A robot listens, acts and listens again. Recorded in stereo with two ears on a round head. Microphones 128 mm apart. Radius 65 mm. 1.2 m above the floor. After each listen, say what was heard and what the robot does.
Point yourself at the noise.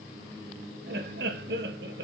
Turn 90° right.
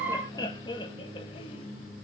So it is at 30° left. Turn 30° left.
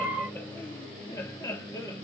The laughter is now 20° left. Turn 20° left.
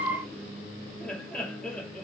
Facing the laughter, 2 to 4 m away.